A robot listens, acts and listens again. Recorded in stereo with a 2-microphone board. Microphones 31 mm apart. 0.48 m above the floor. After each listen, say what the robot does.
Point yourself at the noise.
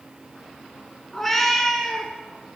Turn 30° left.
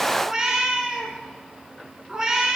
Turn 25° right.
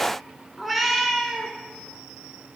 Facing the cat meowing.